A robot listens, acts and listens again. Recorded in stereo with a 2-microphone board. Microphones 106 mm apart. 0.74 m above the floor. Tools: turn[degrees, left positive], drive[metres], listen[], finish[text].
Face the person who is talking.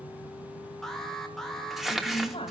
Thought: The woman speaking: about 65° left or 115° left.
Action: turn[65]
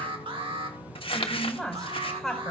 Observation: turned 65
Action: finish[Found it: a woman speaking, straight ahead, over 4 m away.]